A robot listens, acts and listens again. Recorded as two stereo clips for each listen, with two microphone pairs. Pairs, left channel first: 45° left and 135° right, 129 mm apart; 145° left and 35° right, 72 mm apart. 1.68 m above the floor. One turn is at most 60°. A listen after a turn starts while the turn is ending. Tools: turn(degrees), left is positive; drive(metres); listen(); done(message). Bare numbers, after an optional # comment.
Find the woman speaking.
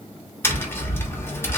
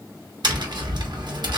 listen()
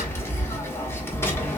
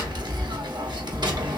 listen()
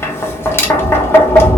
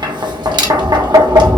done("I can't make out a woman speaking to turn to.")